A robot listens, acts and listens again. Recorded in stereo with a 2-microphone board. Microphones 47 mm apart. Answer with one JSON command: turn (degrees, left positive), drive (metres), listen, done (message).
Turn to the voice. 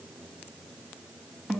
{"listen": true}
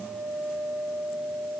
{"listen": true}
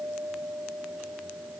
{"done": "I can't make out anyone speaking, only a guitar."}